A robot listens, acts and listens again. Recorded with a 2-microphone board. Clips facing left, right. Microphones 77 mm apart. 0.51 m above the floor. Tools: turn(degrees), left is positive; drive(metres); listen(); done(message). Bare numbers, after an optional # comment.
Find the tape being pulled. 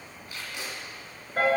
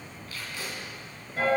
# The tape being pulled: about 20° left or 160° left.
turn(20)
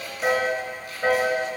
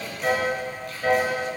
listen()
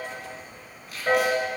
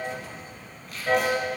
done("Found it: tape being pulled, straight ahead, 1 to 2 m away.")